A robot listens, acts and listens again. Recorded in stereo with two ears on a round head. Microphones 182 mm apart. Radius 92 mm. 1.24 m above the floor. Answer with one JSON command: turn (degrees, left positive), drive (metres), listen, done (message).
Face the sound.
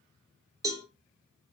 {"turn": -15}
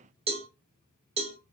{"turn": -150}
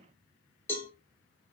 {"turn": 10}
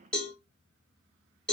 {"done": "Found it: a cowbell, straight ahead."}